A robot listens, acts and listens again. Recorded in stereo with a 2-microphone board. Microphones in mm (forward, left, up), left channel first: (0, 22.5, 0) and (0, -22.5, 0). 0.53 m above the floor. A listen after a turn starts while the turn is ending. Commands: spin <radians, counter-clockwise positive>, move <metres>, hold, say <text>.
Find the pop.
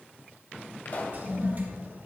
spin 0.87
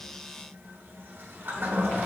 hold
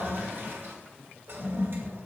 say I heard a pop, but can't make it out now. It was about straight ahead or 80° left.